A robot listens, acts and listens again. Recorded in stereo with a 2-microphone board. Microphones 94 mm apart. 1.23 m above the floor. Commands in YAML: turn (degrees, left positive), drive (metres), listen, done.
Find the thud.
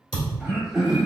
turn: 60
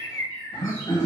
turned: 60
listen: true
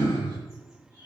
done: "I heard a thud, but can't make it out now. It was about straight ahead or 60° left."